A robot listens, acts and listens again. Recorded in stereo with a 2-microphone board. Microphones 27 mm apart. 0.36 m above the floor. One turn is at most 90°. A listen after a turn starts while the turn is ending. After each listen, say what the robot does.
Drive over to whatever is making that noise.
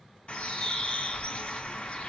Turn 50° left.
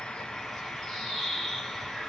Turn 20° left.
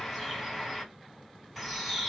Drive 1.0 m forward.
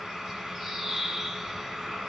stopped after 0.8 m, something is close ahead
Arrived at the bird, straight ahead.